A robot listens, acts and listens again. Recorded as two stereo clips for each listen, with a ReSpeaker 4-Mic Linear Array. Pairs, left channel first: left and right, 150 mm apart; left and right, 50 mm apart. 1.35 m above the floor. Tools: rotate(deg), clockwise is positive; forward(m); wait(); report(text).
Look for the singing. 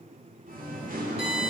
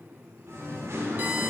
rotate(70)
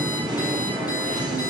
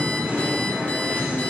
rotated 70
rotate(30)
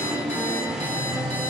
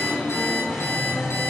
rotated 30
report("Facing the singing, 2 to 4 m away.")